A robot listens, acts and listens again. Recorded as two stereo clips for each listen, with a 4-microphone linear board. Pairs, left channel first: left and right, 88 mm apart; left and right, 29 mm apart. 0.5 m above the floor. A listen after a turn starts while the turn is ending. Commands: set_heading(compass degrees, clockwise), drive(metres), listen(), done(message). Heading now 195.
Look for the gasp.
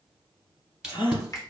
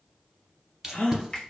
set_heading(120)
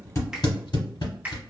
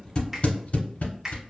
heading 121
listen()
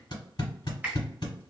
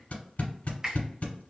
done("I heard a gasp, but can't make it out now. It was about straight ahead or 30° left.")